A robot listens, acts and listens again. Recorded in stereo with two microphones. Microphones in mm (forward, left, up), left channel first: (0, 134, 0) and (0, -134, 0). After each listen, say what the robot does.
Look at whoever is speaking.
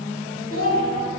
Turn 50° left.
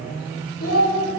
Turn 70° left.
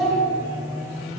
Facing the child speaking, 1 to 2 m away.